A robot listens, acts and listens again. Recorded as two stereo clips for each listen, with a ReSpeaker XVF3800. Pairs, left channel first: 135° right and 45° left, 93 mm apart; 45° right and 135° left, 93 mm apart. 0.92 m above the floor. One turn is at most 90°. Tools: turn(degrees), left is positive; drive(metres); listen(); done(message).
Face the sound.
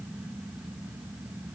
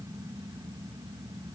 listen()
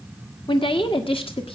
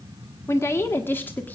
turn(degrees=-90)
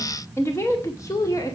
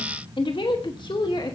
turn(degrees=-80)
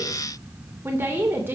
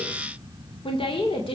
turn(degrees=-25)
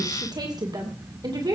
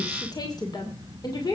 done("Found it: a woman speaking, straight ahead, 2 to 4 m away.")